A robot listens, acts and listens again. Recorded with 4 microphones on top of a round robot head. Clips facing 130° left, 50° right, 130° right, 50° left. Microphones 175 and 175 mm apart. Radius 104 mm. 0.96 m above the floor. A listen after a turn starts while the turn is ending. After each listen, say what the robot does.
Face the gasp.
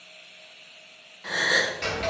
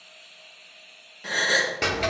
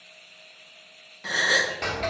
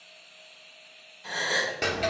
Turn 110° right.
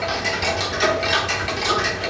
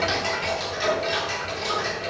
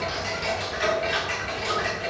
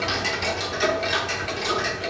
Facing where the gasp came from. I can't hear it now.